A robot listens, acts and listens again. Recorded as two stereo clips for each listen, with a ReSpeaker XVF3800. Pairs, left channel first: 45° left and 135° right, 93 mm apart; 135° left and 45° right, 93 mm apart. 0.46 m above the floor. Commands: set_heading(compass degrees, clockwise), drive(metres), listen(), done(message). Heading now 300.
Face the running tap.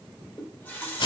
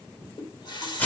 set_heading(190)
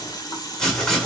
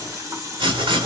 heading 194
done("Found it: a running tap, straight ahead.")